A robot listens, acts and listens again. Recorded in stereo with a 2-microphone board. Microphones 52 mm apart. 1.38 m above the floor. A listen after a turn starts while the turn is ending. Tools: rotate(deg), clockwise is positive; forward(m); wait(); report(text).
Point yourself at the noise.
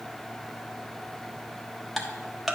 rotate(30)
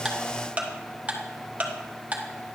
rotate(145)
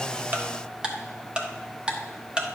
rotate(20)
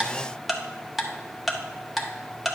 report("Found it: ticking, straight ahead.")